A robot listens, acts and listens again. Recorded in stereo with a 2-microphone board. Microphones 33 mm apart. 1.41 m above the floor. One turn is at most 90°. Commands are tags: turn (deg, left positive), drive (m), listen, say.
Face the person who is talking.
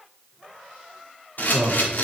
<turn deg="-65"/>
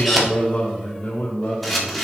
<turn deg="60"/>
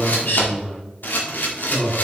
<turn deg="15"/>
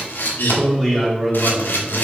<say>Facing the man speaking, 2 to 4 m away.</say>